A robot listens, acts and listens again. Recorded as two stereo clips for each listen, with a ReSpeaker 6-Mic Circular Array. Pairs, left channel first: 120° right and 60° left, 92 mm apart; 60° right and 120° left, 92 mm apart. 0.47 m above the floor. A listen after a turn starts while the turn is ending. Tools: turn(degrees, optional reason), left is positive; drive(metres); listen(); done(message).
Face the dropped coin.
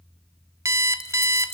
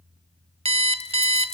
turn(degrees=-60, reason="The dropped coin: 60° right.")
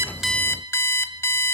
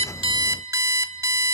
done("Facing where the dropped coin came from. I can't hear it now.")